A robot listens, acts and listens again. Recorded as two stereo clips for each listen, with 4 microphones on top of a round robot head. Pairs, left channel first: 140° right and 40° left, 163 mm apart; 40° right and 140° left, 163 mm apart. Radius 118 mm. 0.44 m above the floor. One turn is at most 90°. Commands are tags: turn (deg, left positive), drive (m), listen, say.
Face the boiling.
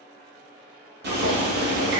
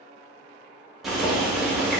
<turn deg="50"/>
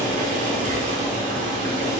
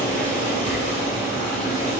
<say>Facing the boiling.</say>